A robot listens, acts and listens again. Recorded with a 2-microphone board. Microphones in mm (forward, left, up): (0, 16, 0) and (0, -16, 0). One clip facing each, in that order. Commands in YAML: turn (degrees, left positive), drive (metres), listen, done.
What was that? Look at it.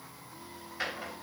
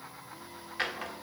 turn: -90
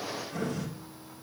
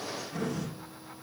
done: "Found it: a drawer, straight ahead."